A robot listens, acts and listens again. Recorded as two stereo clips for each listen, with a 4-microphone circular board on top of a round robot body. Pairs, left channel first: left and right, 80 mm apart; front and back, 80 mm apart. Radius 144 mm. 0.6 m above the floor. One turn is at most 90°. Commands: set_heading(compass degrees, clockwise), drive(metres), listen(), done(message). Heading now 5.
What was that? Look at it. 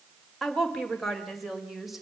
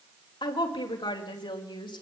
done("Facing the woman speaking.")